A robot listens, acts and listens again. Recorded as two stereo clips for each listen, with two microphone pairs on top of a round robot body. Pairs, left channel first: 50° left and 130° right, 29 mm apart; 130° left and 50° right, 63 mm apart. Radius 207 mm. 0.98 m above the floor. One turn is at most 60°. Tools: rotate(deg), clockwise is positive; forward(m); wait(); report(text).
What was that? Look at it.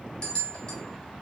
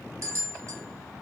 rotate(10)
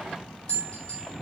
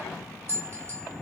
report("Facing the bell, 1 to 2 m away.")